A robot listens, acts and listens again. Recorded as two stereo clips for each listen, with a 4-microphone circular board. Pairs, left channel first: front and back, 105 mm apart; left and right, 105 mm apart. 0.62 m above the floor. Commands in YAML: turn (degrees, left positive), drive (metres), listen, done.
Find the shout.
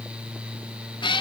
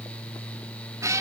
listen: true
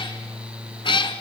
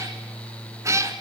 listen: true
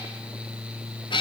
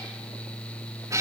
done: "I can't make out a shout to turn to."